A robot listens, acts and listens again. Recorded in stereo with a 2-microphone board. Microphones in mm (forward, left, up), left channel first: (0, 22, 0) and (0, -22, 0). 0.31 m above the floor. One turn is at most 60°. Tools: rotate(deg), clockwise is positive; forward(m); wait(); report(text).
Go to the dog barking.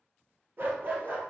rotate(45)
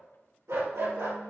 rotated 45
rotate(60)
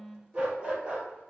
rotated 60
rotate(25)
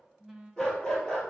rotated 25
rotate(-15)
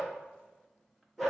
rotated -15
forward(1.0)
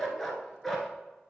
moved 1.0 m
forward(1.0)
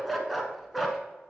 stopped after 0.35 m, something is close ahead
report("Arrived at the dog barking, straight ahead.")